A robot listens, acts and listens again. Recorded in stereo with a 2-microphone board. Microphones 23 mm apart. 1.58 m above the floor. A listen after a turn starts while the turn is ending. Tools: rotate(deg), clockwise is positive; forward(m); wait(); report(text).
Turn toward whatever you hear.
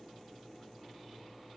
wait()
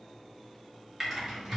rotate(30)
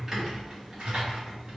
rotate(140)
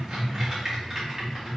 rotate(20)
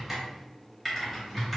report("Facing the typing on a keyboard.")